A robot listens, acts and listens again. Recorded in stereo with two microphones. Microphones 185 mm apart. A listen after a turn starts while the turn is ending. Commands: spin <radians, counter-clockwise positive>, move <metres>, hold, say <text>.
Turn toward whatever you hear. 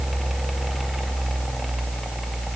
hold
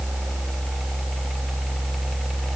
hold
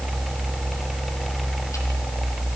say I can't make out anything.